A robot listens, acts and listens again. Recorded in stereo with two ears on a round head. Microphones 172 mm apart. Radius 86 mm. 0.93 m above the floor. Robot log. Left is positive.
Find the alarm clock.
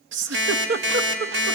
note: The alarm clock: about 65° right or 115° right.
cmd yaw -65
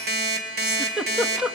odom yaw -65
note: So it is at 50° right.
cmd yaw -50
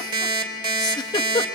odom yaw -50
note: The alarm clock is now 25° right.
cmd yaw -25
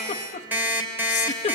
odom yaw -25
note: The alarm clock is now 10° right.
cmd yaw -10
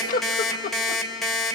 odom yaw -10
end: Facing the alarm clock, 2 to 4 m away.